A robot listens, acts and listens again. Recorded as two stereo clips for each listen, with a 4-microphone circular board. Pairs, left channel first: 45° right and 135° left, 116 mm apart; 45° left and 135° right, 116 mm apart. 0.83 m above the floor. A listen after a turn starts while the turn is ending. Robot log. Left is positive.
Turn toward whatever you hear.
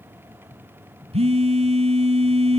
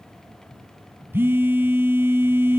note: The phone buzzing: 155° left.
cmd yaw +155
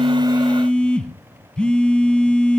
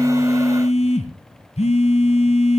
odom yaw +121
note: The phone buzzing is now 35° left.
cmd yaw +35
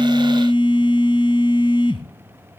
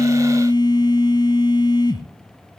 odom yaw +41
end: Found it: a phone buzzing, straight ahead.